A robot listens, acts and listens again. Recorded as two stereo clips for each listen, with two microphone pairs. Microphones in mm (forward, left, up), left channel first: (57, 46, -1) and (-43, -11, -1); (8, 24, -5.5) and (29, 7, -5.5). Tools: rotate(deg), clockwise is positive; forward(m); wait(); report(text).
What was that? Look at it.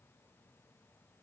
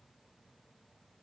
wait()
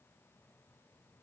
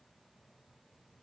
wait()
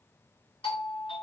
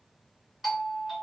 rotate(-45)
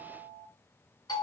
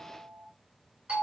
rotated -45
rotate(10)
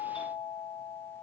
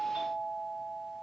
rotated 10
report("Found it: a doorbell, straight ahead.")